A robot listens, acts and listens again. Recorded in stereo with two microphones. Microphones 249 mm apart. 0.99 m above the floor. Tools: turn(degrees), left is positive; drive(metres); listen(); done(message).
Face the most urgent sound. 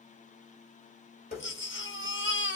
turn(degrees=50)
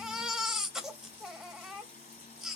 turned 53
done("Facing the baby crying.")